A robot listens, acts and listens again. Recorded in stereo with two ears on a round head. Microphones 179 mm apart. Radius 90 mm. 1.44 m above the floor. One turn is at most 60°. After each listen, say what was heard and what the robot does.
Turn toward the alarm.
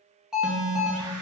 Turn 30° left.
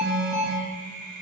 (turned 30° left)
So it is at 30° right. Turn 30° right.
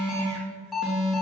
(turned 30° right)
Found it: an alarm, straight ahead.